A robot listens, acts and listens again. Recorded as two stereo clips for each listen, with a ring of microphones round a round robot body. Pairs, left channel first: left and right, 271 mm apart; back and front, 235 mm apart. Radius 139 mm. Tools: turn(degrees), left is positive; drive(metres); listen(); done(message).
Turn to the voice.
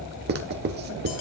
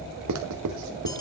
listen()
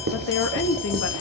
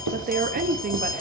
turn(degrees=50)
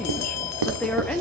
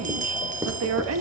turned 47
done("Facing the woman speaking, 1 to 2 m away.")